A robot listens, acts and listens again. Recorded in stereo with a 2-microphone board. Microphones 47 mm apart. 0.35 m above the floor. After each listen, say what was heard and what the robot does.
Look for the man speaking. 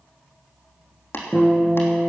Keep listening.
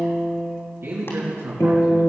The man speaking: about 70° right or 110° right. Turn 70° right.
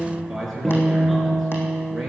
Facing the man speaking.